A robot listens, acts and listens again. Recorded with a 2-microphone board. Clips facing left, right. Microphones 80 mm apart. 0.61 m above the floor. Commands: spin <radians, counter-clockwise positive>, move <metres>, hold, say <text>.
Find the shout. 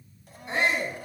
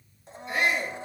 spin 0.52
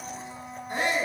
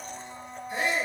spin 2.09
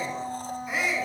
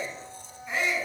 say Found it: a shout, straight ahead.